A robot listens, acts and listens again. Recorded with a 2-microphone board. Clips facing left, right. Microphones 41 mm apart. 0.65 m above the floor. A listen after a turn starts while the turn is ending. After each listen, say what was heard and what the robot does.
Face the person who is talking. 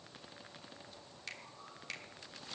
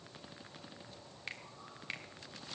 Keep listening.
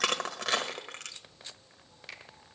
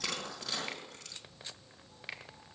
Keep listening.
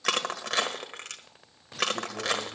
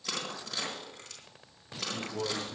The man speaking: about 55° right or 125° right. Turn 55° right.
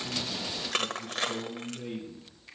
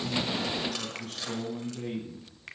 So it is at 70° right. Turn 70° right.
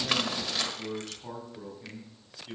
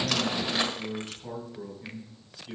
The man speaking is now 10° left. Turn 10° left.
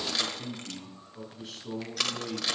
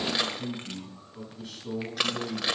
Facing the man speaking.